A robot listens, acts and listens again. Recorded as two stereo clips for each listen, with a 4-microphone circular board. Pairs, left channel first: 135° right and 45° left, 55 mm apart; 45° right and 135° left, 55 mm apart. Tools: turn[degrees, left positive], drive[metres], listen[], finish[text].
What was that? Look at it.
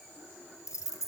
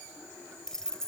Thought: The keys jangling: 120° right.
Action: turn[-120]
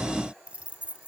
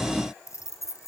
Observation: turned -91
Thought: The keys jangling is now 20° right.
Action: turn[-20]
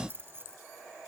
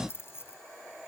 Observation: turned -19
Action: finish[Found it: keys jangling, straight ahead.]